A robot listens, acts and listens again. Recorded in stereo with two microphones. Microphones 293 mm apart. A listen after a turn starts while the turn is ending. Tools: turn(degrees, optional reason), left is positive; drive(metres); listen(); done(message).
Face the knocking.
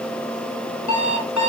listen()
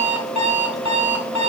listen()
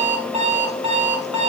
done("I can't make out knocking, only an alarm clock.")